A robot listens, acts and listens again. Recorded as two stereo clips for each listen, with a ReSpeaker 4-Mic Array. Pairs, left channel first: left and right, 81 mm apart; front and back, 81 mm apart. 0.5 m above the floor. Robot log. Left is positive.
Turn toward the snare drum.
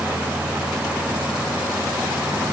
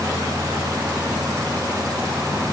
cmd idle
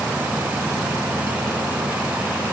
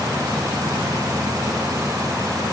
cmd idle
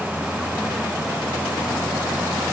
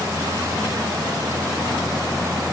end: I can't make out a snare drum.